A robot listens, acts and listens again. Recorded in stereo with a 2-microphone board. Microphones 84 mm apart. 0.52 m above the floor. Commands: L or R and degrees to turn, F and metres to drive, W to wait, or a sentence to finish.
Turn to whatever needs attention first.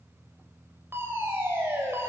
R30
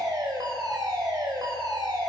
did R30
R120
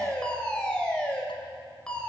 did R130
L10
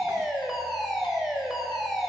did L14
Facing the fire alarm.